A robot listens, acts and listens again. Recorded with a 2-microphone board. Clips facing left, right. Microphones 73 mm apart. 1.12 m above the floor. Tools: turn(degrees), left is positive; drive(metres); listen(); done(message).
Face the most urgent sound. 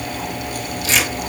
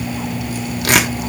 listen()
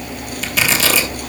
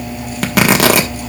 listen()
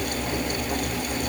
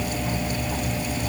done("I can't make out anything urgent, only tearing paper.")